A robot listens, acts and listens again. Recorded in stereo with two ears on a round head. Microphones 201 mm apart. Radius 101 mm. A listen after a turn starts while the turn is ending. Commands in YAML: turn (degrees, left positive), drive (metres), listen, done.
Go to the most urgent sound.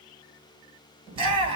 turn: -25
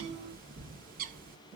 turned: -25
listen: true
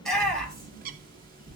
drive: 1.0
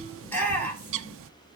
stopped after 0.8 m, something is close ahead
turn: 10
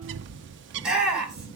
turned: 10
done: "Blocked. The shout is further on, straight ahead."